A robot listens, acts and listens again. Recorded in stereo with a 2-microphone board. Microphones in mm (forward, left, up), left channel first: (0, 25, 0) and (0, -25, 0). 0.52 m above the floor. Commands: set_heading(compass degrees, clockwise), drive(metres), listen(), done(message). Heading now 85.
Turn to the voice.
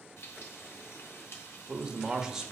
set_heading(115)
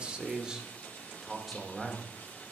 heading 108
set_heading(78)
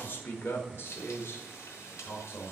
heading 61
set_heading(301)
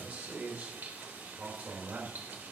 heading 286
set_heading(321)
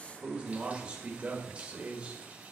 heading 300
set_heading(320)
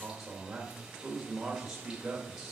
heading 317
done("Found it: a man speaking, straight ahead, 1 to 2 m away.")